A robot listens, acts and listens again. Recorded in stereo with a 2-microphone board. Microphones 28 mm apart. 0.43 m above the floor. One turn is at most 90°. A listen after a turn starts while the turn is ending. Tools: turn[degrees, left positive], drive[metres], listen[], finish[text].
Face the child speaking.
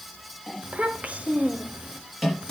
Thought: The child speaking: about 55° right or 125° right.
Action: turn[-55]
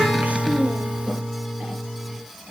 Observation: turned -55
Thought: So it is at 60° right.
Action: turn[-60]
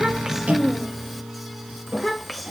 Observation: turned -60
Action: finish[Found it: a child speaking, straight ahead.]